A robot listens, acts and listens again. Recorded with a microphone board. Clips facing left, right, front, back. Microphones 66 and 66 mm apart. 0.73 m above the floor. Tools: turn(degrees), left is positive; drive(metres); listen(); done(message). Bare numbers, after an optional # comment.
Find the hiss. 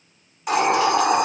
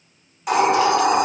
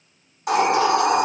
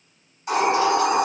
done("Found it: a hiss, straight ahead.")